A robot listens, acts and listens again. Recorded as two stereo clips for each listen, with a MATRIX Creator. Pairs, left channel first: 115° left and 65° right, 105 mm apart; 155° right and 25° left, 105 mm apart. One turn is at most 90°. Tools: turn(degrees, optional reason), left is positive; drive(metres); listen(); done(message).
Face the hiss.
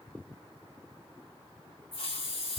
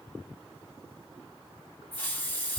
turn(degrees=90, reason="The hiss: 130° left.")
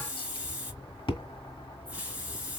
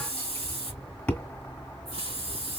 turn(degrees=10, reason="The hiss is now 10° left.")
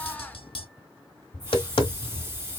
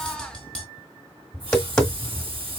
listen()
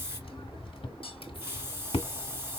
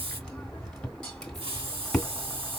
done("Found it: a hiss, straight ahead.")